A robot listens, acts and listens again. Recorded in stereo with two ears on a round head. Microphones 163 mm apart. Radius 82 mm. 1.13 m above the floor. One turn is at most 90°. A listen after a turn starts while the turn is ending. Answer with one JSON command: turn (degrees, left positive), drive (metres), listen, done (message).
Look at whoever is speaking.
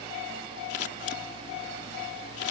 {"listen": true}
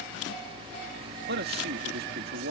{"turn": -60}
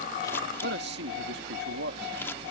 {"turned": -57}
{"turn": -65}
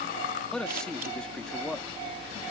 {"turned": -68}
{"done": "Found it: a man speaking, straight ahead."}